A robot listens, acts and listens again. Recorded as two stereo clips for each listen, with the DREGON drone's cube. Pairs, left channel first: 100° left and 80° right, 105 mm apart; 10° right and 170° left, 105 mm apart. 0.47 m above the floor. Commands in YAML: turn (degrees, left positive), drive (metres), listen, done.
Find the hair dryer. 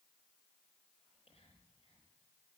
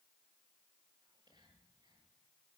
listen: true
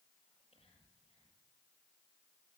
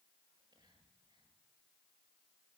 listen: true
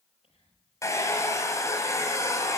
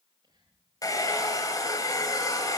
turn: 40
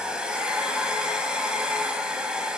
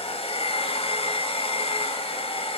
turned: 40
done: "Found it: a hair dryer, straight ahead."